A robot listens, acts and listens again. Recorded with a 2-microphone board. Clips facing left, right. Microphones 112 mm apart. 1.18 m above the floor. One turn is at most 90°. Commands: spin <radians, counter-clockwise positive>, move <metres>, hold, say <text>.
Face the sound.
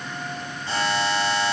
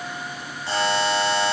spin -1.31
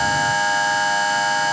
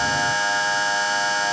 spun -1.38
spin -0.35
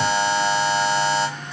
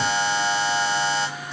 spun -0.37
say Facing the buzzer.